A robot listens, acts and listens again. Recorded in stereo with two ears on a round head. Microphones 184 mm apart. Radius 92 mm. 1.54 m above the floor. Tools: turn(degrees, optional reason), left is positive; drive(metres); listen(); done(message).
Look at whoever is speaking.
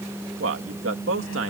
turn(degrees=-65, reason="The man speaking: about 65° right or 115° right.")
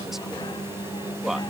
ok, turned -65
done("Found it: a man speaking, straight ahead.")